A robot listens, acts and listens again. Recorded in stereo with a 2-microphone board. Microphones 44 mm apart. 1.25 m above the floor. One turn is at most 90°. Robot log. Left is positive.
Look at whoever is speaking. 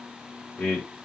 note: The man speaking: about 65° left or 115° left.
cmd yaw +65
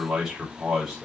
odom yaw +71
end: Facing the man speaking.